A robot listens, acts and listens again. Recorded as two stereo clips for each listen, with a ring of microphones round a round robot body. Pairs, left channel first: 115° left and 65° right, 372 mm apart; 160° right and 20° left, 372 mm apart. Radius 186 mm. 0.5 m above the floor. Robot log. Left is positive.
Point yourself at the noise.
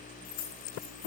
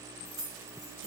note: The keys jangling: 110° left.
cmd yaw +110
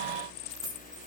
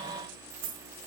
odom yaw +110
note: The keys jangling is now 20° left.
cmd yaw +20
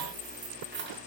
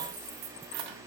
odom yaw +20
end: Found it: keys jangling, straight ahead, 2 to 4 m away.